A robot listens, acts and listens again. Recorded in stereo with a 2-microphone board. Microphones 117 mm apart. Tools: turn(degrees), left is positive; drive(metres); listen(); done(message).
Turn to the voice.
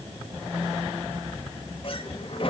listen()
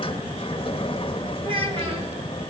turn(degrees=-50)
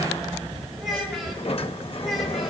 done("Found it: a child speaking, straight ahead, over 4 m away.")